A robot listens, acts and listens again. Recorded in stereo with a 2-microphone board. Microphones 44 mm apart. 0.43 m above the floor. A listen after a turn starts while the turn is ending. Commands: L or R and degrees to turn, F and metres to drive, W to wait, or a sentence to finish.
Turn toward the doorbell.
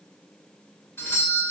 L65
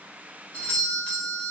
L35
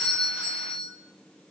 R20
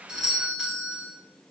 R10
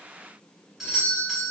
Facing the doorbell, over 4 m away.